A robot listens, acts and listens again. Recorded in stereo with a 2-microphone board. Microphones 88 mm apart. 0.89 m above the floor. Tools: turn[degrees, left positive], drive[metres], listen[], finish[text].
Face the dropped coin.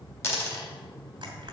Thought: The dropped coin: about 30° left or 150° left.
Action: turn[30]
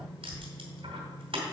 Action: listen[]
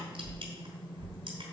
Action: finish[I heard a dropped coin, but can't make it out now. It was about straight ahead or 120° left.]